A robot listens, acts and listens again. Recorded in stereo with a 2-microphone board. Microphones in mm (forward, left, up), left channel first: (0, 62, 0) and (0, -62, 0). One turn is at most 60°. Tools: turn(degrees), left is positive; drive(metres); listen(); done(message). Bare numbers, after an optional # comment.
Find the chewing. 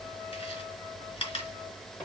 # The chewing: about 45° left or 135° left.
turn(45)
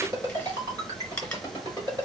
# So it is at 10° left.
turn(10)
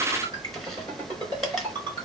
listen()
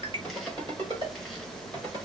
listen()
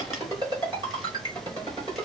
done("I heard chewing from this way, but can't make it out now.")